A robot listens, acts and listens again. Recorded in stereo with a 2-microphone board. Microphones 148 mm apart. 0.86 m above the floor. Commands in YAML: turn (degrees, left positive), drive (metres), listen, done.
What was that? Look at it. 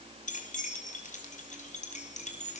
turn: 55
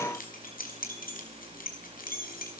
turn: 80
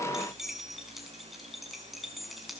done: "Facing the keys jangling, over 4 m away."